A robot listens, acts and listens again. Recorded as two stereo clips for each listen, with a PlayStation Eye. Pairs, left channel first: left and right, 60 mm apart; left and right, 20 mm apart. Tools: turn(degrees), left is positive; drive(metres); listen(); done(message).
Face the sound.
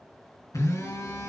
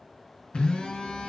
turn(degrees=70)
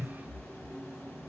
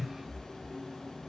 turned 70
turn(degrees=35)
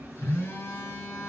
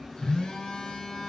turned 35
turn(degrees=35)
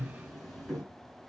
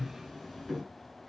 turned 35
done("Facing the phone buzzing.")